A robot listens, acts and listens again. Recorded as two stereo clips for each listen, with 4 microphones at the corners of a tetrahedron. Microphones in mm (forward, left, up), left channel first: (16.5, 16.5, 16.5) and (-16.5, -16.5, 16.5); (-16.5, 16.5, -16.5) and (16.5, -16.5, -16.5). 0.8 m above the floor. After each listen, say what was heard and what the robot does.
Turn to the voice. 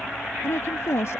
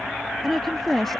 The woman speaking: 50° left. Turn 50° left.
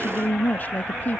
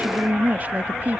Facing the woman speaking.